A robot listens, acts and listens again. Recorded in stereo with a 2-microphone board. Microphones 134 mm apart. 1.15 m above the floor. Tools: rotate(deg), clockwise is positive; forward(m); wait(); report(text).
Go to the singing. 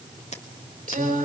rotate(90)
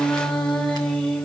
rotate(-10)
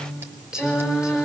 forward(1.0)
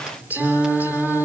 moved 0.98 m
rotate(10)
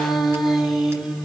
forward(1.0)
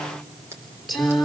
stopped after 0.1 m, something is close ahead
report("Something is in my way. I am facing the singing but have not reached it.")